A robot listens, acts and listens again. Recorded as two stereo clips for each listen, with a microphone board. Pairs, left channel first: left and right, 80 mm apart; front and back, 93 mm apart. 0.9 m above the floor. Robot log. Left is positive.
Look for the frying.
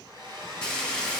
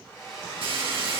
note: The frying: 170° left.
cmd yaw +170
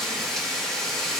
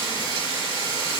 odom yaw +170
note: The frying is now 10° left.
cmd yaw +10
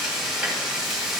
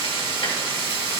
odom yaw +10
end: Found it: frying, straight ahead, 2 to 4 m away.